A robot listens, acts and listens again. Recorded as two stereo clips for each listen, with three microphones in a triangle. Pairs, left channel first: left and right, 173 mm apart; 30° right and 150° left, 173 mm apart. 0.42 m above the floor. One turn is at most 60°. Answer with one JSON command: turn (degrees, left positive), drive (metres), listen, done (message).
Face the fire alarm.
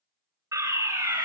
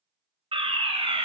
{"turn": -60}
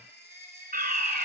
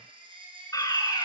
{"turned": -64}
{"turn": -60}
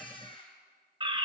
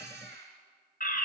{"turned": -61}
{"turn": -35}
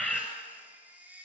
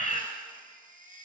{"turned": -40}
{"done": "Found it: a fire alarm, straight ahead."}